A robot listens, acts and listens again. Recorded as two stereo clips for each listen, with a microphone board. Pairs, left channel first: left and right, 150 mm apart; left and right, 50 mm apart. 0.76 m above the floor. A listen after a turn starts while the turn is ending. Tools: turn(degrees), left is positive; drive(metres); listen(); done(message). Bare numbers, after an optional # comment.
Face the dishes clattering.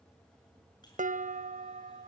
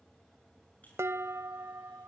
# The dishes clattering: about 60° right or 120° right.
turn(-60)
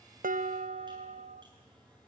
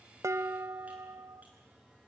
# So it is at 55° right.
turn(-55)
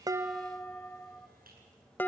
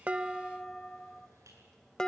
# The dishes clattering is now 10° left.
turn(10)
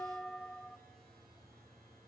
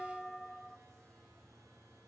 done("Found it: dishes clattering, straight ahead.")